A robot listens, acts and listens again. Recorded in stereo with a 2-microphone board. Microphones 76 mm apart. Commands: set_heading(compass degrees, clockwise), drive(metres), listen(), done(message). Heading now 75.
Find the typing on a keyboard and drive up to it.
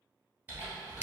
set_heading(100)
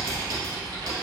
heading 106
set_heading(231)
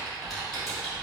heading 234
drive(1.0)
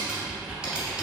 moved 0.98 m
set_heading(244)
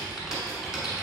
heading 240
drive(1.0)
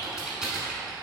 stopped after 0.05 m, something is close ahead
done("I am next to the typing on a keyboard.")